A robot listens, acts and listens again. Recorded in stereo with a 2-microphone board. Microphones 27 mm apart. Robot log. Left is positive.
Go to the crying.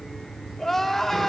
cmd yaw +30
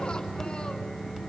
cmd idle
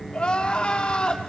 note: So it is at 145° left.
cmd yaw +145
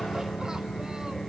cmd idle
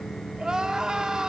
note: The crying is now 25° right.
cmd yaw -25
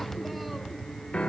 cmd idle
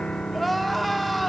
note: The crying is now 10° left.
cmd yaw +10
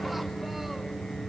cmd idle
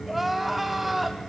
cmd fwd 1.0
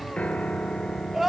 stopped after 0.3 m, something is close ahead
end: Something is in my way. I am facing the crying but have not reached it.